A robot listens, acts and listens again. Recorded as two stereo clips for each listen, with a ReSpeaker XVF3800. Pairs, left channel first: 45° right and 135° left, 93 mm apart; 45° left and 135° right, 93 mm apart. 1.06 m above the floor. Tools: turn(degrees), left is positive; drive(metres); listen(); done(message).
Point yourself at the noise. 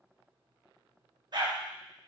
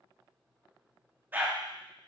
turn(degrees=160)
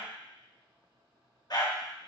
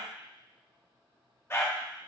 turn(degrees=-15)
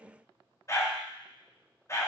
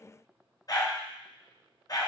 done("Facing the dog barking.")